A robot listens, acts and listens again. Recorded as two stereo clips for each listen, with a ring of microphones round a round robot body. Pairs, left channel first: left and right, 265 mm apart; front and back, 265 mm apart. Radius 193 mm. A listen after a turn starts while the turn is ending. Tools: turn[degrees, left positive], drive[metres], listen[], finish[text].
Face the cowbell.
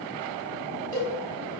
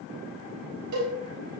Thought: The cowbell: 170° left.
Action: turn[170]
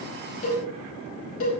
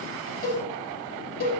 Thought: The cowbell is now 55° left.
Action: turn[55]
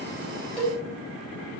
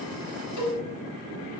Action: finish[Found it: a cowbell, straight ahead.]